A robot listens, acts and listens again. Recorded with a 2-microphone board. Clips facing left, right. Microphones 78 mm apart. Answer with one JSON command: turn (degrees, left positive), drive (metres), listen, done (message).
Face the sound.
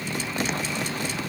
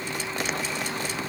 {"listen": true}
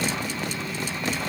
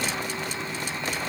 {"listen": true}
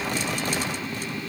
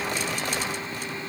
{"done": "I can't make out anything."}